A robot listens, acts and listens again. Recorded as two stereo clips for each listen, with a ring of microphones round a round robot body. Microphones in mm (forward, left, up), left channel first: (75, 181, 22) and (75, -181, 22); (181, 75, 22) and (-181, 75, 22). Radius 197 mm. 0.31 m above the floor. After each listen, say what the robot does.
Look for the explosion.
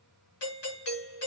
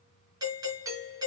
Keep listening.
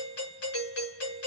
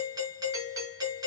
Keep listening.
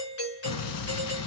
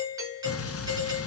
Turn 55° left.
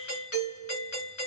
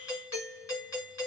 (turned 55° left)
I heard an explosion from this way, but can't make it out now.